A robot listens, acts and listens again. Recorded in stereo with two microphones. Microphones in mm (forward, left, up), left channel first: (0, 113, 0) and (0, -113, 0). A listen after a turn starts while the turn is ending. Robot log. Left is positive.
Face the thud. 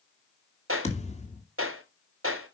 note: The thud: about 30° left or 150° left.
cmd yaw +30
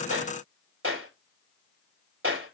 cmd idle
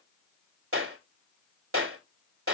end: I heard a thud, but can't make it out now. It was about straight ahead or 120° left.